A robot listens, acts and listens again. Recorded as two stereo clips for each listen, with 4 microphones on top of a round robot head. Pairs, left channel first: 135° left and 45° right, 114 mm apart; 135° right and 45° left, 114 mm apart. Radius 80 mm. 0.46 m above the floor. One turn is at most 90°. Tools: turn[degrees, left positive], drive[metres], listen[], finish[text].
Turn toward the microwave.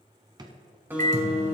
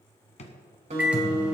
Thought: The microwave: 35° right.
Action: turn[-35]
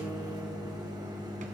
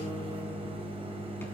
Thought: The microwave is now 10° left.
Action: turn[10]
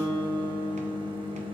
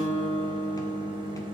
Action: finish[Found it: a microwave, straight ahead.]